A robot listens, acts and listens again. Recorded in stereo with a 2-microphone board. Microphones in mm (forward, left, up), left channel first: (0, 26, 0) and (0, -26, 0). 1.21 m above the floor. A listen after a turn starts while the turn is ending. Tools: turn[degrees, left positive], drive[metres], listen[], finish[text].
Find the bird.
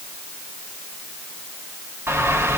Thought: The bird: about 50° right or 130° right.
Action: turn[-50]
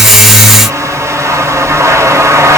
Thought: So it is at 80° right.
Action: turn[-80]
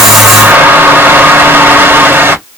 Thought: The bird is now 50° right.
Action: turn[-50]
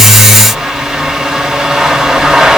Thought: The bird is now 10° right.
Action: turn[-10]
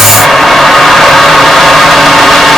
Action: finish[Facing the bird, 1 to 2 m away.]